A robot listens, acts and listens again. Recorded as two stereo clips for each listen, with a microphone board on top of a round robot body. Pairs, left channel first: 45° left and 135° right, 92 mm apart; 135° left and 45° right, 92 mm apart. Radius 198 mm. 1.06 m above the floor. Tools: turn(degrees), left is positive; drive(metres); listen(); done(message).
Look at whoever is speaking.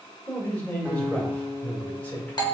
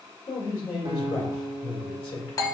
turn(degrees=120)
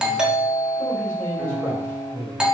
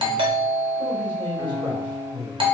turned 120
turn(degrees=-20)
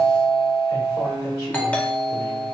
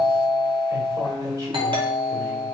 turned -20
listen()
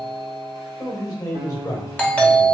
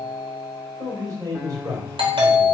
done("Facing the man speaking.")